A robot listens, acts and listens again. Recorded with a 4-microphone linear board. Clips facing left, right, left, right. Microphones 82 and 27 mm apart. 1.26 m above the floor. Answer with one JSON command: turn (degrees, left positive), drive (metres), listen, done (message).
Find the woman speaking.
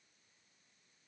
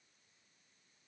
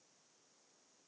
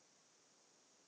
{"listen": true}
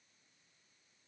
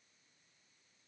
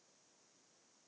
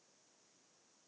{"listen": true}
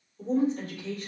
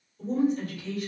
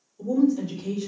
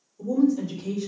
{"turn": 30}
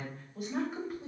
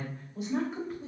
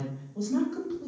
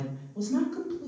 {"done": "Facing the woman speaking, 2 to 4 m away."}